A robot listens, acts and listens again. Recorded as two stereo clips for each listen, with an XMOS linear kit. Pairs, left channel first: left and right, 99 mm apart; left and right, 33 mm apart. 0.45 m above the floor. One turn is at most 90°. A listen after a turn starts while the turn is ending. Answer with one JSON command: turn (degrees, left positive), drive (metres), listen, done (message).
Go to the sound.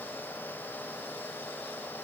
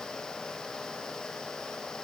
{"listen": true}
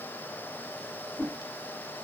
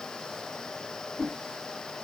{"turn": 30}
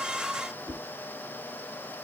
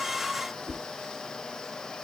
{"turn": 90}
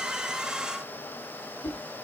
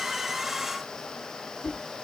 {"turn": 70}
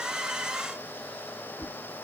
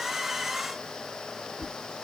{"drive": 1.0}
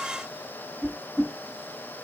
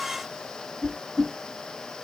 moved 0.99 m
{"drive": 1.0}
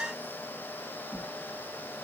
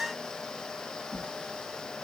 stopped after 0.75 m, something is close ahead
{"turn": -15}
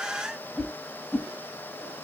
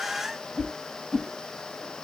{"done": "Arrived at the whoosh, straight ahead."}